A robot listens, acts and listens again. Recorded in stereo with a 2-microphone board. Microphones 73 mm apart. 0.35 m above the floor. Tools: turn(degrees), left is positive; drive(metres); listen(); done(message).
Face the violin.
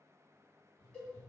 listen()
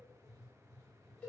listen()
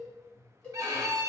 turn(degrees=-50)
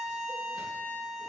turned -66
turn(degrees=15)
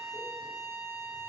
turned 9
done("Found it: a violin, straight ahead, under 1 m away.")